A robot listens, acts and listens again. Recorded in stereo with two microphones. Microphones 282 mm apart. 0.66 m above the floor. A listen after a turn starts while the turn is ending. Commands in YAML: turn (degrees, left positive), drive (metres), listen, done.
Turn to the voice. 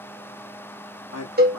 turn: 60
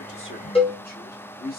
turn: 35
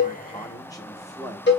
turn: 15
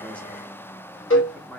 done: "Facing the man speaking, 1 to 2 m away."